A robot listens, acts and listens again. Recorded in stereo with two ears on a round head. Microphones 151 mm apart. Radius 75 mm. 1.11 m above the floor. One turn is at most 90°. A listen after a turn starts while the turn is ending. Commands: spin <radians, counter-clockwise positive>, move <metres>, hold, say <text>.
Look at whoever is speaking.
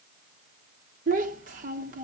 spin -0.87
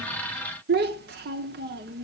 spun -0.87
spin -1.31
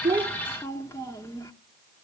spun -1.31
spin 0.35
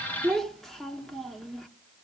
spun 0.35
say Found it: a child speaking, straight ahead.